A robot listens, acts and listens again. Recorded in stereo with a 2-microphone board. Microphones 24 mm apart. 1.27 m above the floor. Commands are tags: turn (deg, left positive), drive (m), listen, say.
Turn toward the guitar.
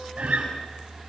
<turn deg="-65"/>
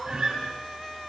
<turn deg="-45"/>
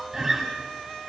<turn deg="-25"/>
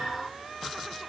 <listen/>
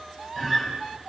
<turn deg="-10"/>
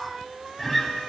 <say>Facing the guitar, over 4 m away.</say>